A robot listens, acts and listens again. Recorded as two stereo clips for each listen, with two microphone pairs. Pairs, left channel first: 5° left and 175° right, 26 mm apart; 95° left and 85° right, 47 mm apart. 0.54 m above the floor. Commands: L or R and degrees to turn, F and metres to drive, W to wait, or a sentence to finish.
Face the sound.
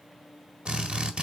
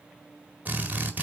R140
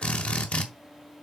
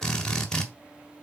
L15
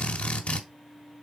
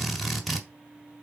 Facing the drill, 1 to 2 m away.